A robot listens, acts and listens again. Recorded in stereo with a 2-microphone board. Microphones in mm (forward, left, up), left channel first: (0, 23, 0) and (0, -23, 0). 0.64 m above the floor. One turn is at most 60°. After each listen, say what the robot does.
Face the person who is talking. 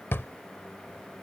Keep listening.
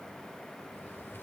Keep listening.
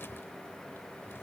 I can't make out anyone speaking, only a drawer.